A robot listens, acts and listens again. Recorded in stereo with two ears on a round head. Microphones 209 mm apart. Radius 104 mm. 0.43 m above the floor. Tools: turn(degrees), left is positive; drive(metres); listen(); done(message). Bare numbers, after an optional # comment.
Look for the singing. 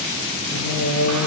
turn(90)
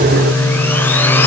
done("Facing the singing.")